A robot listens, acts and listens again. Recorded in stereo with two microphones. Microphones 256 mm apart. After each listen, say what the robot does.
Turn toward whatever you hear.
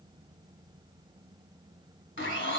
Turn 50° left.
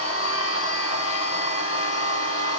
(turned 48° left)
Turn 80° left.
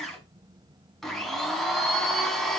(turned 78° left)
Facing the blender.